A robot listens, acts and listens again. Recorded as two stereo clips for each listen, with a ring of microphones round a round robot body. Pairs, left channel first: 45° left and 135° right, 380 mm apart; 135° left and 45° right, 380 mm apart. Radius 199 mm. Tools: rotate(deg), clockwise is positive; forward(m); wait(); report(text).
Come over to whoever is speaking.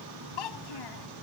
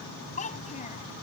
rotate(-65)
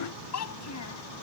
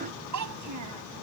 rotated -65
forward(1.0)
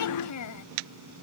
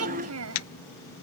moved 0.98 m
forward(1.0)
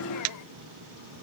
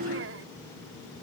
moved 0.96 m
wait()
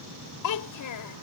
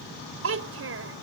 rotate(-10)
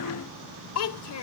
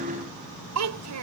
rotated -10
forward(1.0)
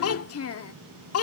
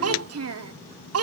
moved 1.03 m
forward(1.0)
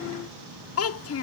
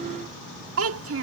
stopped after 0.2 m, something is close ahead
report("Arrived at the child speaking, straight ahead.")